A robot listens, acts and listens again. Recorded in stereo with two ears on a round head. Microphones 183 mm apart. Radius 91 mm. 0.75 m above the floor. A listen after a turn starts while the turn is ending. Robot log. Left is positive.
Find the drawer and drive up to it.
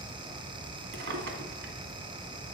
note: The drawer: about 60° right or 120° right.
cmd yaw -60
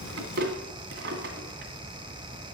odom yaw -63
note: So it is at 55° right.
cmd yaw -55
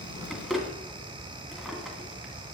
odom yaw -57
cmd fwd 1.0
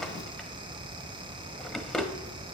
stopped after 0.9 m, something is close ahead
end: I am next to the drawer.